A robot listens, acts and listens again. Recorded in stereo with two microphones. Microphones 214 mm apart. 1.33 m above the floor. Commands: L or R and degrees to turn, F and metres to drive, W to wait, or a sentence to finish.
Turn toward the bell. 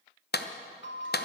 L60
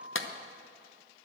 Found it: a bell, straight ahead.